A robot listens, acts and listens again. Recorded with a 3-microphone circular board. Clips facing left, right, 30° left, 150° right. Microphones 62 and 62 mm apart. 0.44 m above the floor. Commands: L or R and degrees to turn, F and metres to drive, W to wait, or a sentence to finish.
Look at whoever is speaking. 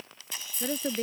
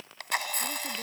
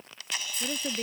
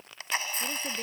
L110
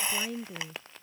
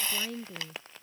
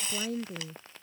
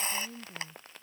Found it: a woman speaking, straight ahead.